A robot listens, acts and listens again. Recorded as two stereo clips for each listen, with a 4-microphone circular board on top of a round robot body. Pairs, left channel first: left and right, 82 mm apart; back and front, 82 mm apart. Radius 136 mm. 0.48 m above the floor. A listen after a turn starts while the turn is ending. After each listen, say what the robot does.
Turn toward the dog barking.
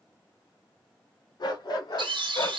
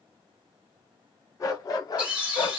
Turn 140° left.
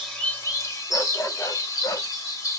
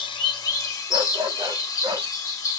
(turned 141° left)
Turn 40° left.
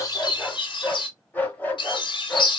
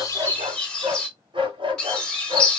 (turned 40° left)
Turn 20° left.
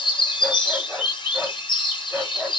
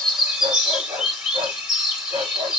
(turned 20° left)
Found it: a dog barking, straight ahead.